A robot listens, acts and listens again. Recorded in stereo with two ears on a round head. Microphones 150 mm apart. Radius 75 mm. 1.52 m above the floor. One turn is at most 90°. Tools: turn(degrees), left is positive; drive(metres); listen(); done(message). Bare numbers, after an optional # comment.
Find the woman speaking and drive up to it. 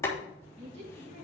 # The woman speaking: about 40° right or 140° right.
turn(-40)
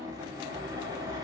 listen()
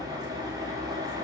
listen()
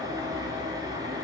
done("I heard a woman speaking, but can't make it out now. It was about straight ahead or 100° right. I did not reach it.")